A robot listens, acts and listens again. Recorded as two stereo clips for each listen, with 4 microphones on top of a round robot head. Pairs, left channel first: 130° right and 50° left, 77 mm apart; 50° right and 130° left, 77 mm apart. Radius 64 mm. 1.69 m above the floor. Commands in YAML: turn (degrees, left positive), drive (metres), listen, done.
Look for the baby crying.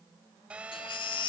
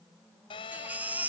turn: -155
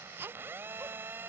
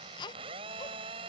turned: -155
turn: -15
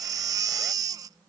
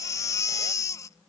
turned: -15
done: "Found it: a baby crying, straight ahead."